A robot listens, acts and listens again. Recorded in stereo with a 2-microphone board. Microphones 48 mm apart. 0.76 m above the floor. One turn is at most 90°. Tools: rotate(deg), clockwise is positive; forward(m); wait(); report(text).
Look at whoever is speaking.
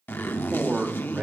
rotate(25)
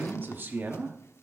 rotate(90)
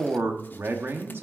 rotate(60)
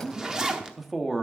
report("Facing the man speaking.")